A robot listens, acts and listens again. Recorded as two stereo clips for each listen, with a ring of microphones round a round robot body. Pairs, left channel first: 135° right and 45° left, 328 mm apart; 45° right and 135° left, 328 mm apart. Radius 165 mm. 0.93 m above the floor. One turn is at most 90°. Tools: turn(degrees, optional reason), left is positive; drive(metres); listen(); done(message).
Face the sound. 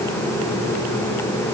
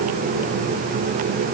listen()
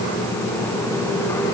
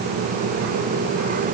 listen()
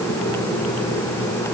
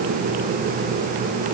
done("I can't make out anything.")